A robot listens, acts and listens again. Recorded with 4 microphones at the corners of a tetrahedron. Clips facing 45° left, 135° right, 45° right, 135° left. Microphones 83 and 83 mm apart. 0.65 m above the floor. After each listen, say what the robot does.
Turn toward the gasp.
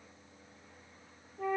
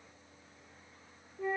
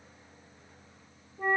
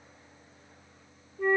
Keep listening.
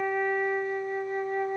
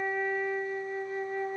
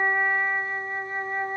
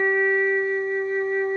Keep listening.
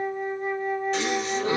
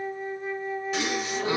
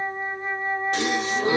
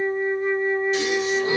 Turn 50° right.
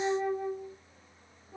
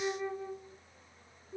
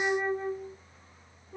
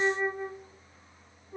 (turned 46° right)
I heard a gasp from this way, but can't make it out now.